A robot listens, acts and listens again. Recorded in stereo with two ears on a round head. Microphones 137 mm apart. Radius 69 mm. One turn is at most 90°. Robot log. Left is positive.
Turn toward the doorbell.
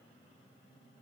cmd idle
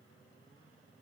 cmd idle
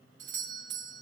note: The doorbell: about 55° right or 125° right.
cmd yaw -55
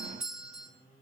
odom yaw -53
end: Facing the doorbell.